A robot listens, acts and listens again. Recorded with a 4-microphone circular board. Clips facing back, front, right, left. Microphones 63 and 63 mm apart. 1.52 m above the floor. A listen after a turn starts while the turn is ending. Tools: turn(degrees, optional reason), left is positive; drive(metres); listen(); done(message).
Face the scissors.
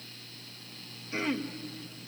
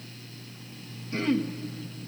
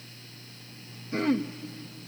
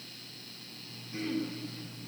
listen()
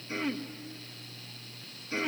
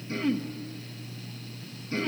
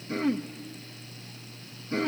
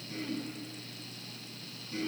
listen()
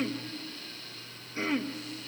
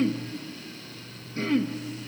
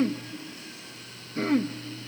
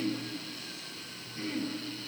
done("I can't make out scissors to turn to.")